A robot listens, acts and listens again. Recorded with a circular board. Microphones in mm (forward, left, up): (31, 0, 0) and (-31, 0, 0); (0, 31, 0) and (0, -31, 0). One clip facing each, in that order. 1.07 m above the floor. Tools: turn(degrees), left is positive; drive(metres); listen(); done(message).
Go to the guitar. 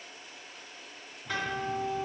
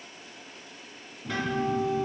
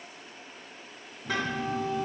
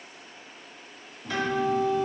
turn(degrees=95)
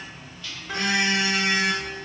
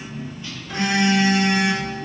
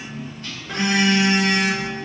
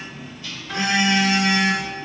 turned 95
listen()
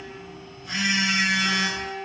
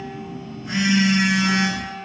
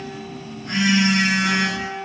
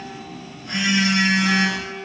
turn(degrees=30)
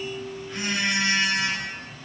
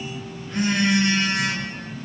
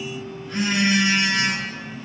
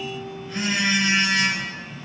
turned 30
listen()
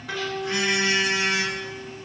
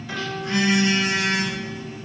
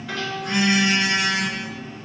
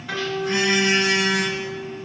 drive(metres=1.0)
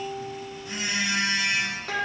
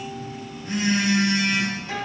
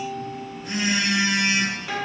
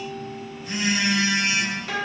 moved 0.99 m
drive(metres=1.0)
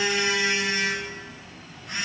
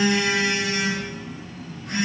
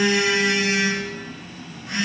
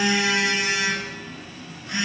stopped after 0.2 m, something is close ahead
listen()
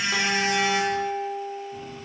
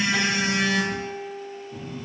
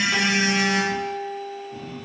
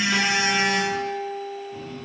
done("Arrived at the guitar, straight ahead.")